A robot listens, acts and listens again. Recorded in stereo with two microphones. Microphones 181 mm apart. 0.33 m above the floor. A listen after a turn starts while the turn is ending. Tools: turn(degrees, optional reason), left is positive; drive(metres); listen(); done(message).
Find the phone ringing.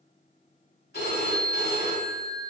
turn(degrees=60, reason="The phone ringing: about 60° left or 120° left.")
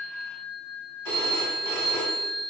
turn(degrees=15, reason="So it is at 15° left.")
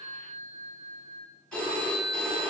done("Facing the phone ringing.")